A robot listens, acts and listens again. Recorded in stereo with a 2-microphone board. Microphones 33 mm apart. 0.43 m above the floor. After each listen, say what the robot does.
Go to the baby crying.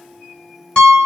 Keep listening.
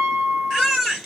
Turn 30° right.
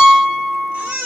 Turn 135° right.
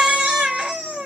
Turn 25° right.
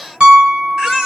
Drive 1.0 m forward.
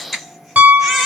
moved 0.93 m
Drive 1.0 m forward.
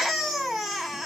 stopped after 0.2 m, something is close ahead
I am next to the baby crying.